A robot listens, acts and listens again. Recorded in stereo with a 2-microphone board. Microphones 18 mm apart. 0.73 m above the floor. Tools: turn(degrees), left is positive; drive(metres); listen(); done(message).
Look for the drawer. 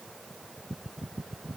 listen()
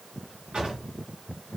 turn(degrees=-55)
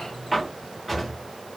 done("Facing the drawer.")